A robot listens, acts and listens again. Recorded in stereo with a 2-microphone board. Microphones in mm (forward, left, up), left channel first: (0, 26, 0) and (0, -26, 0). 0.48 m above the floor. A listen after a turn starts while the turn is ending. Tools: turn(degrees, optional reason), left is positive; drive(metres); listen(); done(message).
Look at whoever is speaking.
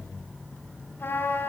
listen()
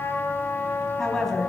turn(degrees=30)
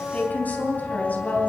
turn(degrees=150, reason="So it is at 150° left.")
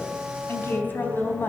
turn(degrees=45, reason="The woman speaking is now 45° left.")
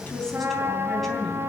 listen()
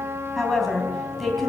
done("Found it: a woman speaking, straight ahead.")